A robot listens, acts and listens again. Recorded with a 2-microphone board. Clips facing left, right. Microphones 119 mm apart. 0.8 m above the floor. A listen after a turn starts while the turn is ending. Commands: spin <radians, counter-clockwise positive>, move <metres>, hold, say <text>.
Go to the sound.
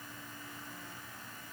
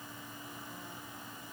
hold
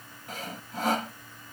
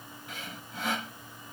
spin 0.70
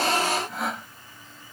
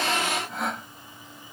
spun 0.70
move 1.0
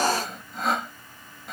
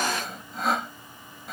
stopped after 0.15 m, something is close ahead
say Blocked. The sawing is further on, straight ahead.